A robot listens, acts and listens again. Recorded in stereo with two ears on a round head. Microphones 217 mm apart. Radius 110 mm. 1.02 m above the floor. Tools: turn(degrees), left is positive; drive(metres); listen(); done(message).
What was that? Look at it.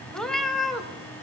turn(degrees=30)
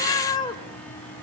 turn(degrees=160)
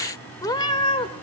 turn(degrees=25)
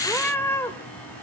turn(degrees=10)
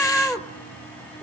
done("Found it: a cat meowing, straight ahead.")